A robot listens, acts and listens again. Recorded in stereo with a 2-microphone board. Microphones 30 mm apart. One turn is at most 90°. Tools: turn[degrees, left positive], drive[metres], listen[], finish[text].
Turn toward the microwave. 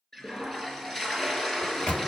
Thought: The microwave: about 45° left or 135° left.
Action: turn[45]
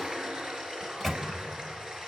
Thought: So it is at 10° left.
Action: turn[10]
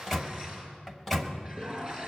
Action: finish[Found it: a microwave, straight ahead, 1 to 2 m away.]